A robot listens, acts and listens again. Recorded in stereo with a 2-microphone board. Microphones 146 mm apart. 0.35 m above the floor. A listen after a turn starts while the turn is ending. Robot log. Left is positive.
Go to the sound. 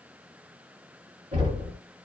note: The knocking: about 55° right or 125° right.
cmd yaw -55
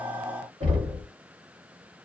note: So it is at 55° right.
cmd yaw -55
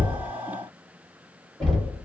cmd fwd 1.0
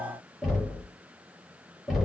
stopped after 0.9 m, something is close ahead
end: I am next to the knocking.